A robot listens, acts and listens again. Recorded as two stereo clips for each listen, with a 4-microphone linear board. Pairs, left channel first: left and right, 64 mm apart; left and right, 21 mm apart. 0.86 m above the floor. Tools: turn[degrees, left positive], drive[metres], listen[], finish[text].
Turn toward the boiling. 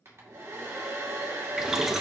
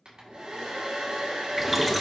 Action: turn[-30]
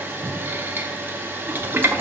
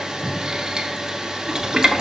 Thought: So it is at 145° right.
Action: turn[-145]
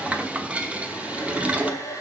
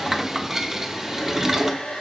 Thought: The boiling is now 20° right.
Action: turn[-20]
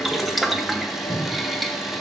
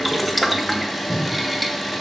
Action: finish[Found it: boiling, straight ahead.]